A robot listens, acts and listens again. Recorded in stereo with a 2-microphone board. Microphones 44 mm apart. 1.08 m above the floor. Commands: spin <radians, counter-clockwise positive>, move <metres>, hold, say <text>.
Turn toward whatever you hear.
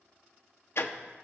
spin 1.22
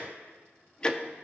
spin 0.35
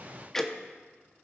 spin 0.17
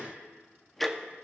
say Found it: ticking, straight ahead.